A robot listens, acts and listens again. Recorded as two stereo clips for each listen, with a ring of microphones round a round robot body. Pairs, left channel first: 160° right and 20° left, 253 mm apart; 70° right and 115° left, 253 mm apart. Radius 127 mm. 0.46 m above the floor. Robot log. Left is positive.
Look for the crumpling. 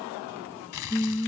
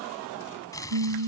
note: The crumpling: 145° right.
cmd yaw -145
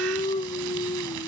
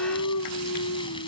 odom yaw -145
cmd idle
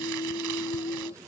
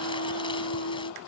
cmd idle
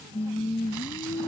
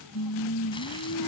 end: Facing where the crumpling came from. I can't hear it now.